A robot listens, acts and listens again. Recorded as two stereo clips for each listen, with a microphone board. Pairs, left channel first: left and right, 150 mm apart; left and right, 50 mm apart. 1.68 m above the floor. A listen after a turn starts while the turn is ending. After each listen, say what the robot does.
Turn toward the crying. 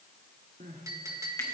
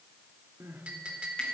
Turn 65° right.
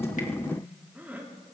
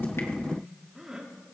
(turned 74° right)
Turn 15° right.
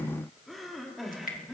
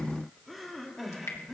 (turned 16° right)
Facing the crying, 2 to 4 m away.